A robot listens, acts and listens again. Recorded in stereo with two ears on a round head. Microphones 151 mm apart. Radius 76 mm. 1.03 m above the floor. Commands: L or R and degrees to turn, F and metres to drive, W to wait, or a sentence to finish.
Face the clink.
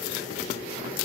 W
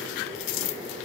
W
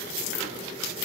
I can't make out a clink.